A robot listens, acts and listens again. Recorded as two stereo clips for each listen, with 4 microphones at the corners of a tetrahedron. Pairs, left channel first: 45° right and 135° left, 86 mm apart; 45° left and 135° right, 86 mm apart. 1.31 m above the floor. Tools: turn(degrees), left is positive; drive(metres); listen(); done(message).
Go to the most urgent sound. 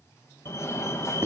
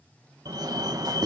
turn(degrees=-95)
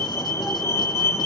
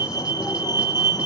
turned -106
turn(degrees=10)
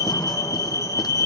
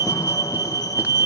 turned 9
drive(metres=1.0)
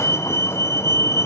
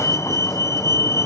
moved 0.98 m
drive(metres=1.0)
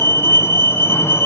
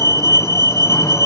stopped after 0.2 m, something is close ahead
done("Arrived at the fire alarm, straight ahead.")